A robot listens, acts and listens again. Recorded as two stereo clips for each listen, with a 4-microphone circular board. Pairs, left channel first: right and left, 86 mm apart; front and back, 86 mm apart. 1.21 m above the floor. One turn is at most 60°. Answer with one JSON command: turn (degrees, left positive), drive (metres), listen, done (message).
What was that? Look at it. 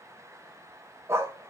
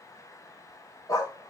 {"turn": 35}
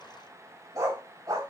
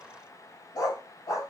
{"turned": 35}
{"turn": 45}
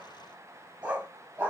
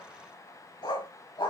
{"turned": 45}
{"turn": 20}
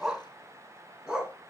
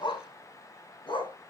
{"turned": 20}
{"done": "Found it: a dog barking, straight ahead."}